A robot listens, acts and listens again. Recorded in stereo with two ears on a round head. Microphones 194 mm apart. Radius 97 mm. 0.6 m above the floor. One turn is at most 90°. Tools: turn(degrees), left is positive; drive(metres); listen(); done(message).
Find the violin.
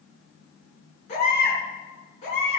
listen()
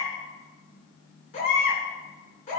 listen()
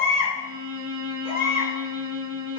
turn(degrees=-65)
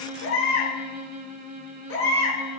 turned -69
turn(degrees=-45)
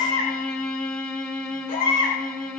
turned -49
done("Facing the violin.")